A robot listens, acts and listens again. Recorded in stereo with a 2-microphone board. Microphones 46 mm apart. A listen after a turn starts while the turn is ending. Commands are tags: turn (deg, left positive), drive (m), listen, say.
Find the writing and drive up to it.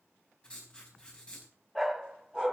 <turn deg="20"/>
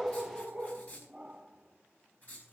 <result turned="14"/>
<turn deg="145"/>
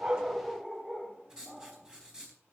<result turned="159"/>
<turn deg="-15"/>
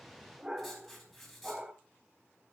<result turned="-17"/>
<drive m="1.0"/>
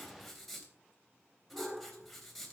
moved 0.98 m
<drive m="1.0"/>
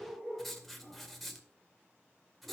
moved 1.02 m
<drive m="1.0"/>
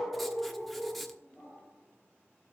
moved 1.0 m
<listen/>
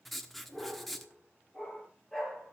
<drive m="1.0"/>
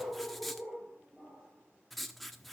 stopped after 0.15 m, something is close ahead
<say>Arrived at the writing, straight ahead.</say>